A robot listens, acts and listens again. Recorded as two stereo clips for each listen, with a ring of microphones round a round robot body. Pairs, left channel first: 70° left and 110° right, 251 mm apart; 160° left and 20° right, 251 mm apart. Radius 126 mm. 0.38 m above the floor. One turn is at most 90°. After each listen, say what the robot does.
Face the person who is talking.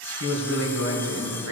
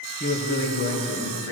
Turn 80° right.
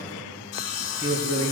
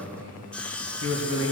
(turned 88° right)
Found it: a man speaking, straight ahead, 2 to 4 m away.